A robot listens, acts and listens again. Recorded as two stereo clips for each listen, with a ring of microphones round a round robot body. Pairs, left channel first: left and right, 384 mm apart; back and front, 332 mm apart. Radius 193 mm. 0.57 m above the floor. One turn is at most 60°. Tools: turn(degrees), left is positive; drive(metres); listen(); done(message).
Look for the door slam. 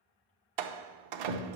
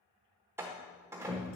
turn(degrees=-60)
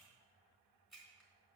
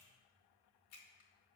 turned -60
turn(degrees=-25)
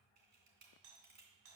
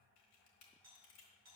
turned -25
done("I heard a door slam from this way, but can't make it out now.")